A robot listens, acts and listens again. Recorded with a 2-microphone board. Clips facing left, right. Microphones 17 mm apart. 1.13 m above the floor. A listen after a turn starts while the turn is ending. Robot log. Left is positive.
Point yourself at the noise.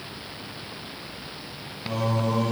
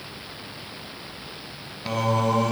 note: The singing: about 60° right or 120° right.
cmd yaw -60
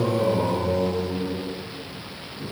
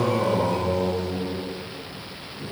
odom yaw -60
note: So it is at 15° right.
cmd yaw -15
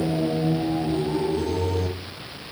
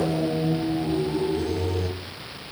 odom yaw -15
note: The singing is now 20° left.
cmd yaw +20
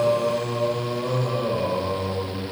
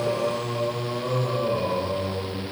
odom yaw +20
end: Facing the singing, 1 to 2 m away.